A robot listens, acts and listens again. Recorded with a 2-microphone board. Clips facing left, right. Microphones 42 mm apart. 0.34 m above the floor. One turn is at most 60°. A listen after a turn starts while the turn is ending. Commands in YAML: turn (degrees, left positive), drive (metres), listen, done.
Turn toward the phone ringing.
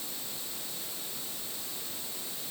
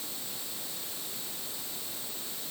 listen: true
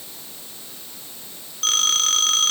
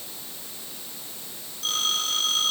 turn: 60
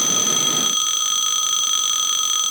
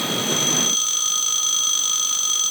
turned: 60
turn: 40
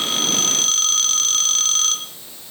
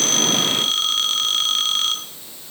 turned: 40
turn: -15
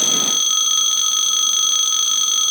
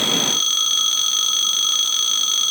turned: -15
done: "Found it: a phone ringing, straight ahead, 2 to 4 m away."